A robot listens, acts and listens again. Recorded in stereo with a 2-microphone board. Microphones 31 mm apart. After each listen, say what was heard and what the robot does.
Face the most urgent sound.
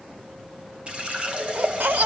The baby crying: about 75° right or 105° right. Turn 75° right.
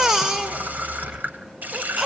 So it is at 15° right. Turn 15° right.
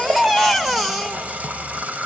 Found it: a baby crying, straight ahead.